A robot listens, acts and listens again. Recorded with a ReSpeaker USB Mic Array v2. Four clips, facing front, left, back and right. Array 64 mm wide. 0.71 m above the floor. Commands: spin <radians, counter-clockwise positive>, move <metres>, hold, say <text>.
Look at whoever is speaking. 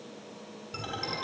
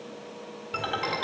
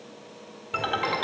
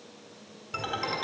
hold
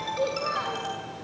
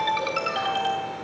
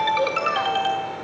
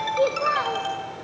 spin -1.92
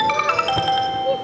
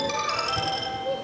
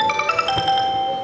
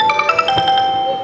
hold
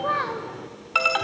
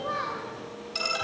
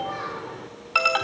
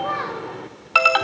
spin -0.26
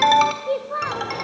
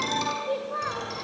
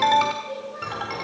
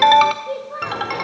say Facing the child speaking, 2 to 4 m away.